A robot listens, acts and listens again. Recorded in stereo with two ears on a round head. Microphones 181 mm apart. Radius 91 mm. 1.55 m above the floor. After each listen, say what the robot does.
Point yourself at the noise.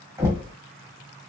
Turn 30° right.
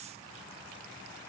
Keep listening.
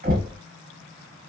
Turn 135° right.
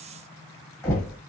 Turn 15° left.
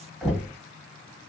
Facing the knocking, 1 to 2 m away.